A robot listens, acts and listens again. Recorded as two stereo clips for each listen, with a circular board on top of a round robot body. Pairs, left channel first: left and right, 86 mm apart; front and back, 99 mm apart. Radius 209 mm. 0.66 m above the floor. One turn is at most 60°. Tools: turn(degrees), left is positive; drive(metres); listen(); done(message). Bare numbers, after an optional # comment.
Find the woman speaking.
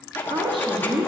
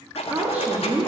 # The woman speaking: 100° right.
turn(-60)
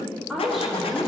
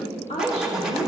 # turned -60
done("Found it: a woman speaking, straight ahead, 2 to 4 m away.")